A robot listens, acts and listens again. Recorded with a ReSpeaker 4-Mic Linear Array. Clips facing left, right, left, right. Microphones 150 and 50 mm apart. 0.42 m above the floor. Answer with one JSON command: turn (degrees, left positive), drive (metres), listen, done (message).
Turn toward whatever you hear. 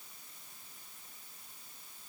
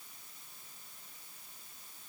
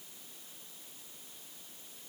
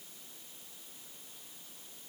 {"listen": true}
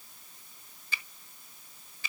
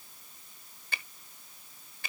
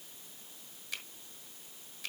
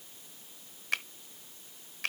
{"turn": -60}
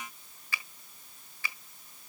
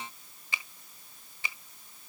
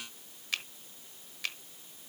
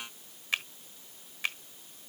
{"turn": -25}
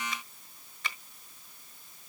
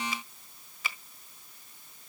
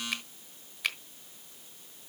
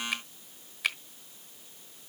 {"done": "Found it: a finger snap, straight ahead."}